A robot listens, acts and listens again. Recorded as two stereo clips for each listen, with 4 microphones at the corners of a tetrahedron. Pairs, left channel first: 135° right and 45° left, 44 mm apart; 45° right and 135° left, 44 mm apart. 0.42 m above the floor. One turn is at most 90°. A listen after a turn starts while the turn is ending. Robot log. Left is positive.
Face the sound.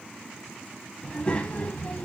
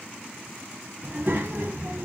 note: The child speaking: 170° left.
cmd yaw +90
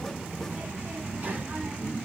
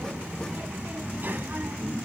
note: The child speaking is now 100° left.
cmd yaw +90
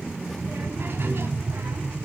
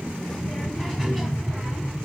note: The child speaking is now 45° left.
cmd yaw +45
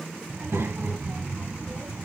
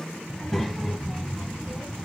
note: The child speaking is now 35° left.
cmd yaw +35
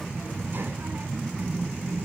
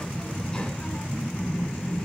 note: The child speaking is now 15° left.
cmd yaw +15
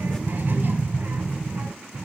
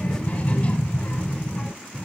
end: Found it: a child speaking, straight ahead, 1 to 2 m away.